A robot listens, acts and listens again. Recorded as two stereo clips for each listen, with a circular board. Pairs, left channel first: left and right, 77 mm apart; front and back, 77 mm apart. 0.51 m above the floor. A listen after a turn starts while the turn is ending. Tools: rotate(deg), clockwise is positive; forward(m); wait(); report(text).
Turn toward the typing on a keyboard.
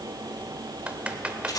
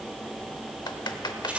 rotate(20)
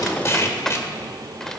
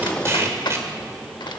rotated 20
report("Found it: typing on a keyboard, straight ahead.")